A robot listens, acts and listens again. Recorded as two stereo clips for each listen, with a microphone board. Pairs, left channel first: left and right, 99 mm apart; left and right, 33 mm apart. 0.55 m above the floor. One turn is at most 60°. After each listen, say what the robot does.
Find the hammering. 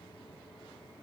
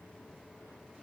Keep listening.
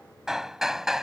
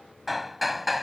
Turn 30° right.
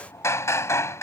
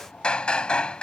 Turn 30° left.
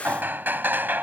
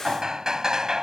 Turn 20° right.
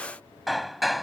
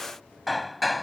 Facing the hammering.